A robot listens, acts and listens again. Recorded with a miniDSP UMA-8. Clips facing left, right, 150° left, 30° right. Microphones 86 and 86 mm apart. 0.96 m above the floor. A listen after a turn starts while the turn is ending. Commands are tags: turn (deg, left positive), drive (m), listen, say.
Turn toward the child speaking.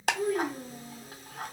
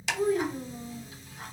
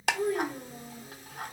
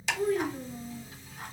<turn deg="-145"/>
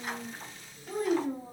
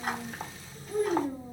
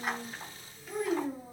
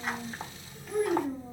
<turn deg="75"/>
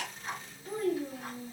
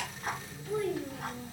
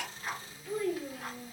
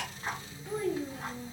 <turn deg="45"/>
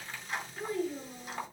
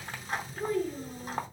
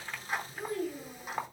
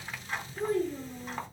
<turn deg="15"/>
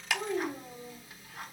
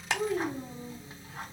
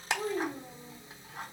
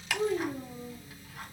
<say>Found it: a child speaking, straight ahead, 2 to 4 m away.</say>